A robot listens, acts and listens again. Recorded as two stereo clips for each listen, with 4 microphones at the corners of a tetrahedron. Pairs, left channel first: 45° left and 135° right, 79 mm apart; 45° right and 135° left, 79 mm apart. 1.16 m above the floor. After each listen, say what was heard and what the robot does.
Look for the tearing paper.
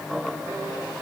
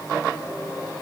Keep listening.
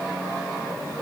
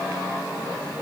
Keep listening.
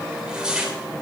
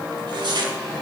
The tearing paper: 145° left. Turn 145° left.
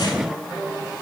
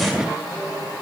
Keep listening.
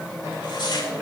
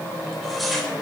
The tearing paper is now 45° left. Turn 45° left.
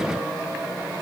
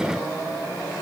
Keep listening.
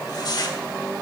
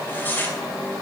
The tearing paper is now 20° left. Turn 20° left.
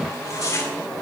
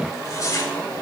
Found it: tearing paper, straight ahead, 2 to 4 m away.